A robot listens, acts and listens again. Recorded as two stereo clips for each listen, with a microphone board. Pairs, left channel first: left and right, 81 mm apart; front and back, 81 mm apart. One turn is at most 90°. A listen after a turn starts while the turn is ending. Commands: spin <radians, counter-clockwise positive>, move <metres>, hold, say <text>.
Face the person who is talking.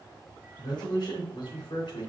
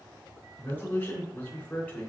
spin 1.31
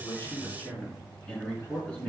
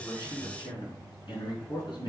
spin 0.35
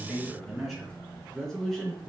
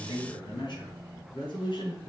say Facing the man speaking.